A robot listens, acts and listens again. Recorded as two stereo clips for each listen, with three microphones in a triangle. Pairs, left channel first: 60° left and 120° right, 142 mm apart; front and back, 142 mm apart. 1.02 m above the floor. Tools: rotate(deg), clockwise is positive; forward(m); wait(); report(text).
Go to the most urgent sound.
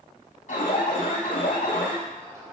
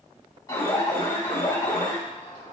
rotate(-60)
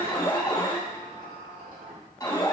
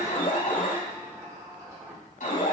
forward(1.0)
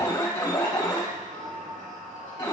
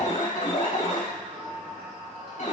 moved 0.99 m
forward(1.0)
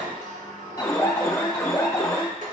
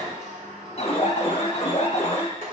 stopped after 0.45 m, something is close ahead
report("I am next to the alarm.")